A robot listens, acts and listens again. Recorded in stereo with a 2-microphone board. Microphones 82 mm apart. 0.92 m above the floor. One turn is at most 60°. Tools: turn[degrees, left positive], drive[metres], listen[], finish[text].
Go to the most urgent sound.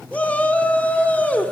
Thought: The shout: about 15° left or 165° left.
Action: turn[15]
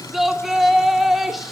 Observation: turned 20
Action: drive[1.0]
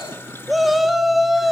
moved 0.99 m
Action: drive[1.0]
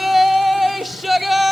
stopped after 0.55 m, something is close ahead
Action: finish[I am next to the shout.]